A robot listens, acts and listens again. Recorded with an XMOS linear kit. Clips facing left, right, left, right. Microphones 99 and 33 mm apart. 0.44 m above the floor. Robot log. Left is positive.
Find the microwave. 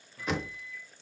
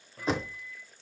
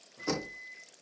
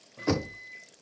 note: The microwave: about 55° right or 125° right.
cmd yaw -55
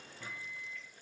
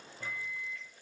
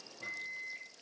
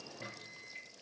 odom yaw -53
note: So it is at 55° right.
cmd yaw -55
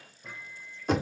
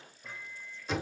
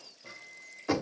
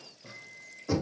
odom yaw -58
end: Found it: a microwave, straight ahead, 1 to 2 m away.